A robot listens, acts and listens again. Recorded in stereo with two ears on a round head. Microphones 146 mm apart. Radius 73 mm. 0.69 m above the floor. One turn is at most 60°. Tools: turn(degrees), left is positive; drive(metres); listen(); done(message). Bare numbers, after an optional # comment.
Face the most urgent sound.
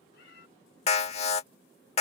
# The alarm: about 40° left or 140° left.
turn(40)
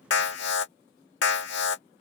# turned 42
# So it is at 95° left.
turn(60)
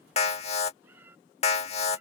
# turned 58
# The alarm is now 40° left.
turn(40)
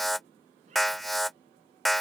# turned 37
done("Facing the alarm.")